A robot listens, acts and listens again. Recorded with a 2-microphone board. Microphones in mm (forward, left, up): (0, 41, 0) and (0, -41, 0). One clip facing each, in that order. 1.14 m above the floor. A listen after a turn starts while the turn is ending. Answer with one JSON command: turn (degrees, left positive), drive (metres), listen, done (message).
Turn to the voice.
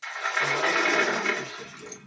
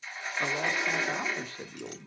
{"turn": -30}
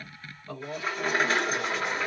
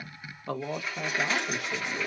{"turn": -120}
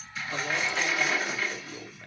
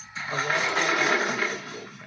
{"turn": -10}
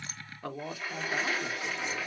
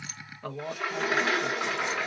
{"done": "Found it: a man speaking, straight ahead, 1 to 2 m away."}